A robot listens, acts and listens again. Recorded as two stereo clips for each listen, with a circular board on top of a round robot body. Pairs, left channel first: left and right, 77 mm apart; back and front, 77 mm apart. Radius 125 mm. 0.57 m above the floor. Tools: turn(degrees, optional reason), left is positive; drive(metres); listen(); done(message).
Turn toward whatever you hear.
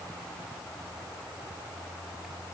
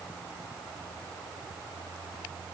listen()
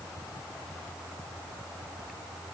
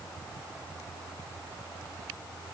listen()
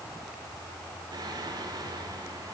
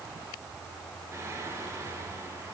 turn(degrees=-55, reason="The singing: 55° right.")
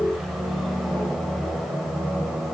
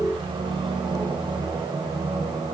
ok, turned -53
done("Found it: singing, straight ahead.")